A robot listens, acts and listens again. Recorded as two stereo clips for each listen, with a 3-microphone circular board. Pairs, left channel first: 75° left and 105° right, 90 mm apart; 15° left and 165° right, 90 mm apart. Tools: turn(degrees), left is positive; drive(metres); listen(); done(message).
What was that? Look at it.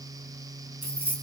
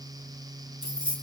turn(degrees=-175)
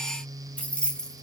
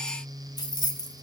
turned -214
done("Facing the keys jangling, 1 to 2 m away.")